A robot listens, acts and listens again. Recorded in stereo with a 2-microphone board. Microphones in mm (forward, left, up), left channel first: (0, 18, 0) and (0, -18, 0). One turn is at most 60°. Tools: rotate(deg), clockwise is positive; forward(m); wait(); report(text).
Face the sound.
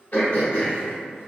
rotate(-60)
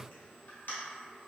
rotate(-60)
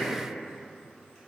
wait()
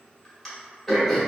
report("Found it: throat clearing, straight ahead.")